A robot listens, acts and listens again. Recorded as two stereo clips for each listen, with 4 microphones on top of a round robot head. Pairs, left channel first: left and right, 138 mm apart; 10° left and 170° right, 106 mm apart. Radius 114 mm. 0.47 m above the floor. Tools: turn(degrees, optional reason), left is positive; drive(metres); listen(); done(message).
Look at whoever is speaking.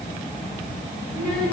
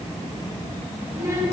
turn(degrees=130, reason="The child speaking: 130° left.")
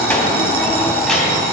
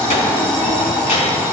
done("Found it: a child speaking, straight ahead.")